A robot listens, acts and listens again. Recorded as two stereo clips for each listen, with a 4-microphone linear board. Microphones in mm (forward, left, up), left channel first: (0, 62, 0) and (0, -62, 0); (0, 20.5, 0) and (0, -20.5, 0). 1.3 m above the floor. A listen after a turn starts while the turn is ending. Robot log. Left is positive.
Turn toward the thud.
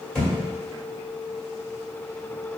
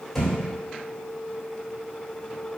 cmd yaw +30
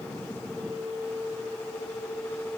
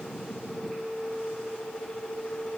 cmd idle
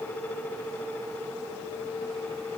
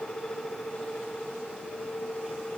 end: I heard a thud, but can't make it out now. It was about 25° right or 145° left.